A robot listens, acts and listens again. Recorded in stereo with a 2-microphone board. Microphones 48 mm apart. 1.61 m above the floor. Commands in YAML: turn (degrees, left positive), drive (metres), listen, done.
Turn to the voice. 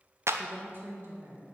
turn: -50
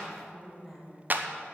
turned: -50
done: "Found it: a woman speaking, straight ahead."